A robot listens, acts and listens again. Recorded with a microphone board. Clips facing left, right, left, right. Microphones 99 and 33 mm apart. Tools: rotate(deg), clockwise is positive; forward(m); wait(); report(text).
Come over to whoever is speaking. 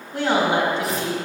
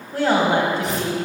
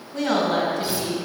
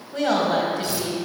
rotate(45)
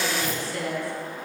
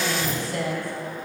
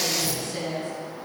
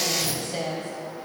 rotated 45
rotate(90)
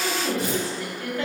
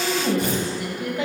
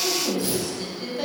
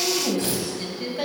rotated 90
rotate(20)
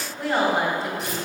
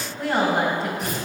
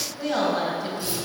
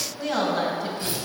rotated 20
forward(1.0)
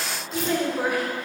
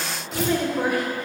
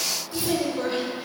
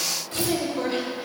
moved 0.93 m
forward(1.0)
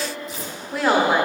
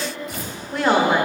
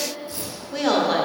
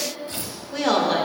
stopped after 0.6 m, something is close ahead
report("Arrived at the woman speaking, straight ahead.")